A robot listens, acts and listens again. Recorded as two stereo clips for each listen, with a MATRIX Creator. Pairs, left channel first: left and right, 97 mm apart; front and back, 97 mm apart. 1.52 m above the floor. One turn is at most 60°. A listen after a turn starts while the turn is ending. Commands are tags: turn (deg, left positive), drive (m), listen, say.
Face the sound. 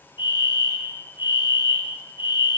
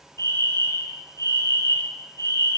<turn deg="55"/>
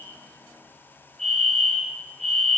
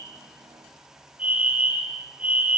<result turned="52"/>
<say>Facing the fire alarm.</say>